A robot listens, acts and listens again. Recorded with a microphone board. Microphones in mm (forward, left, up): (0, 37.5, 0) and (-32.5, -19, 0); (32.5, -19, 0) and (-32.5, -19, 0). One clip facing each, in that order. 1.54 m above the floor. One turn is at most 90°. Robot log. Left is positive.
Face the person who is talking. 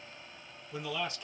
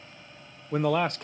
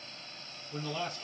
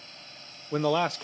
note: The man speaking: 160° right.
cmd yaw -90
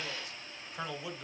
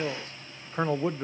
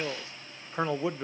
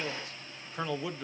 note: The man speaking is now 70° right.
cmd yaw -70
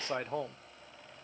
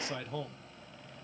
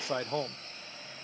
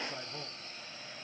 end: Facing the man speaking.